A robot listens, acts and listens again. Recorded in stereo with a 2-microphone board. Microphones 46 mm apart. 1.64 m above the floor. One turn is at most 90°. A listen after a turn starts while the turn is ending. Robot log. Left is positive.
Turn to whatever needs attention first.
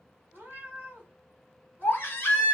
note: The baby crying: about 55° left or 125° left.
cmd yaw +55
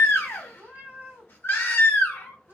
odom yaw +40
note: So it is at 70° left.
cmd yaw +70
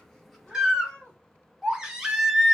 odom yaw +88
note: The baby crying is now 15° right.
cmd yaw -15
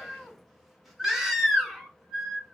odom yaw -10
end: Facing the baby crying, under 1 m away.